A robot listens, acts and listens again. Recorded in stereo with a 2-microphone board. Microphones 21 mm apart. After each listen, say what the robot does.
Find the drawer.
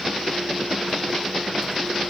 Keep listening.
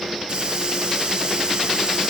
Keep listening.
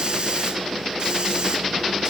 I can't make out a drawer, only a hiss.